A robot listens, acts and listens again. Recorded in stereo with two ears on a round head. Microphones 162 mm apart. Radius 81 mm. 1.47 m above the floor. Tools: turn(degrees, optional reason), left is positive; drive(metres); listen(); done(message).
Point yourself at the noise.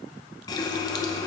turn(degrees=20, reason="The running tap: about 20° left or 160° left.")
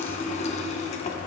turn(degrees=135, reason="So it is at 135° left.")
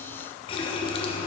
turn(degrees=35, reason="The running tap is now 35° left.")
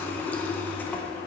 turn(degrees=10, reason="The running tap is now 10° left.")
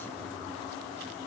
done("Facing the running tap, under 1 m away.")